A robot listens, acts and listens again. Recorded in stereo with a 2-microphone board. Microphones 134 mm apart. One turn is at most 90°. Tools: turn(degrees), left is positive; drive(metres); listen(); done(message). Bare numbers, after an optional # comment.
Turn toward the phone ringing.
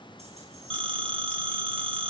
# The phone ringing: about 40° right or 140° right.
turn(-40)
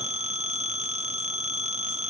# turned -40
# So it is at 90° right.
turn(-90)
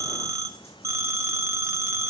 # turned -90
# The phone ringing is now 25° right.
turn(-25)
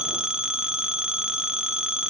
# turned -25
done("Facing the phone ringing, under 1 m away.")